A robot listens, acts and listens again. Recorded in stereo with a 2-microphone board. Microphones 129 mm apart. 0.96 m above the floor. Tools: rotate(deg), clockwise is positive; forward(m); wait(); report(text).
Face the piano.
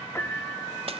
rotate(-20)
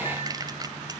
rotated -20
wait()
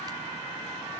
wait()
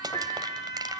rotate(-140)
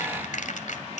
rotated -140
wait()
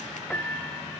rotate(-10)
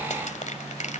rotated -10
wait()
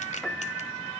report("Found it: a piano, straight ahead.")